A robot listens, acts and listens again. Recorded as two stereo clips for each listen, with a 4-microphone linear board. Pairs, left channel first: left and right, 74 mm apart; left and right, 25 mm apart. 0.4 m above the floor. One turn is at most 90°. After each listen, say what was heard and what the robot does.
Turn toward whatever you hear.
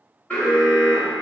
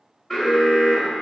The alarm: about 20° left or 160° left. Turn 20° left.
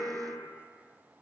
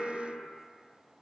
Facing the alarm.